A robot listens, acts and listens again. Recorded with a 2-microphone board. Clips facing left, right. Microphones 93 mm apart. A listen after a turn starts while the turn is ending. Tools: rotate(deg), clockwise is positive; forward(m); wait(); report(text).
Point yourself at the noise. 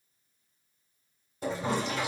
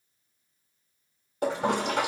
rotate(65)
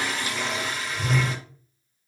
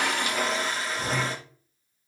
rotate(35)
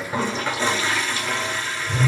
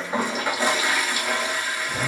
rotate(15)
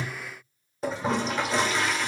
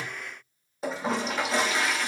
report("Found it: a toilet flushing, straight ahead.")